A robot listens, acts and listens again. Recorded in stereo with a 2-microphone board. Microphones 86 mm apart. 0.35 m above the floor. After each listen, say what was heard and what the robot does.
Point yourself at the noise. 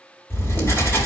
The writing: about 30° left or 150° left. Turn 30° left.
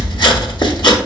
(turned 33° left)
So it is at 120° left. Turn 120° left.
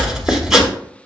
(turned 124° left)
Facing the writing.